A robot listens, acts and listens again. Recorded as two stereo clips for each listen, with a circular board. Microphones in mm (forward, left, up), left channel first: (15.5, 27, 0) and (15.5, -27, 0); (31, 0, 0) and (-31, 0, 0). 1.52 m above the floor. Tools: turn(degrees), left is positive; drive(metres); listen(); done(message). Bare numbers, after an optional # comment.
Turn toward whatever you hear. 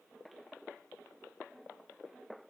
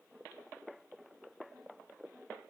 listen()
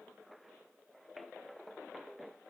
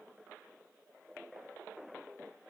listen()
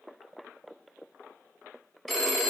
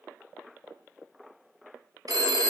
# The phone ringing: straight behind.
turn(180)
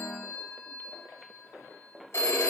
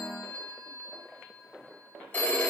# The phone ringing is now 60° left.
turn(60)
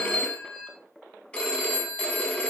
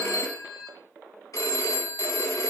# The phone ringing is now 25° left.
turn(25)
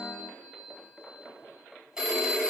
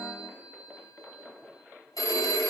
# The phone ringing is now 10° right.
turn(-10)
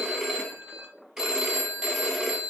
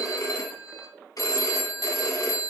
done("Facing the phone ringing.")